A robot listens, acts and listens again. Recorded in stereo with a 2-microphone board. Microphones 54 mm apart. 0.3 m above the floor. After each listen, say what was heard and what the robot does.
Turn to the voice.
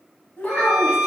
The child speaking: about 25° left or 155° left. Turn 25° left.
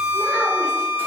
Keep listening.
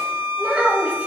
So it is at 30° right. Turn 30° right.
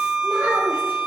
The child speaking is now 35° right. Turn 35° right.
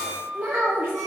The child speaking is now 40° right. Turn 40° right.
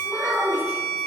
The child speaking is now 25° right. Turn 25° right.
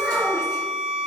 Facing the child speaking.